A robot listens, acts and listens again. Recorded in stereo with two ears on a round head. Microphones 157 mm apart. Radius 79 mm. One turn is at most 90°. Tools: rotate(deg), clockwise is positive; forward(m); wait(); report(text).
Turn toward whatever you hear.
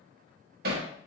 rotate(60)
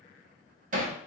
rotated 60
rotate(50)
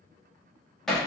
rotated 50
report("Facing the hammering, 1 to 2 m away.")